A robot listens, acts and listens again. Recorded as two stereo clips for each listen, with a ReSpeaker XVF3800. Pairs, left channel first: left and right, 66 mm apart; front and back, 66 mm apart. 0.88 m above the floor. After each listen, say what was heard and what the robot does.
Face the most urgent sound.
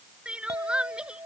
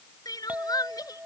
The crying: 15° right. Turn 15° right.
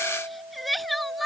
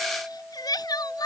Found it: crying, straight ahead.